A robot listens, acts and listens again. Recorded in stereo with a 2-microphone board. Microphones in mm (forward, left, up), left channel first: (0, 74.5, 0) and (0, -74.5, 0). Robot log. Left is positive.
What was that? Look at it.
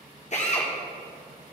note: The drill: about 50° left or 130° left.
cmd yaw +50
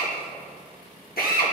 note: So it is at 80° left.
cmd yaw +80
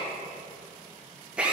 note: The drill is now 10° right.
cmd yaw -10
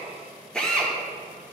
end: Facing the drill, 1 to 2 m away.